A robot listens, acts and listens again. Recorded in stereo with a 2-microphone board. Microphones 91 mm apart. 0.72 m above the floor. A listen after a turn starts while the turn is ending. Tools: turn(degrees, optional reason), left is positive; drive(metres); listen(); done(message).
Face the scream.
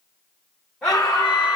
turn(degrees=30)
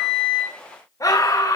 turn(degrees=140, reason="So it is at 140° left.")
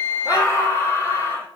turn(degrees=40, reason="The scream is now 40° left.")
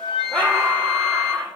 turn(degrees=10, reason="The scream is now 10° left.")
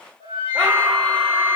done("Found it: a scream, straight ahead, 1 to 2 m away.")